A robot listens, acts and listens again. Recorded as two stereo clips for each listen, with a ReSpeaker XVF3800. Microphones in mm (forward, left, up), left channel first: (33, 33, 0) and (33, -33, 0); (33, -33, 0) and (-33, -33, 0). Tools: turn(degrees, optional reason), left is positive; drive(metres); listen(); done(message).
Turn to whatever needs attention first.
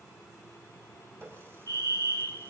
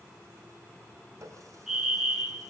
turn(degrees=-100, reason="The fire alarm: 100° right.")
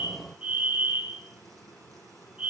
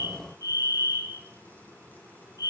turn(degrees=-20, reason="The fire alarm is now 20° right.")
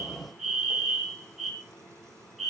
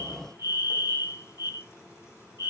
done("Facing the fire alarm.")